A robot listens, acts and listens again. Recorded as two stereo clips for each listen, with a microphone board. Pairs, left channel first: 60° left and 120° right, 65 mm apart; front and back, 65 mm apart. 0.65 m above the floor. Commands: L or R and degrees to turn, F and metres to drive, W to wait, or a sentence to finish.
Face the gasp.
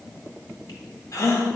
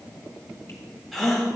L95
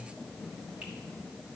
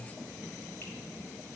I heard a gasp from this way, but can't make it out now.